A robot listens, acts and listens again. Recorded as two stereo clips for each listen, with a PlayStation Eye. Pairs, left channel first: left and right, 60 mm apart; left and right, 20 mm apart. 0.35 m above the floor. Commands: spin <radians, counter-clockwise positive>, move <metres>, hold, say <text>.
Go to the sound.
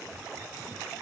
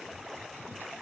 hold
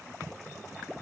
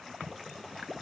hold
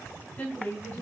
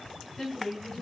spin 0.35
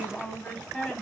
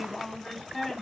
move 1.0
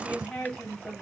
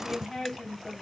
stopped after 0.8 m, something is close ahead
spin 0.17
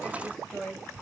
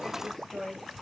say I am next to the woman speaking.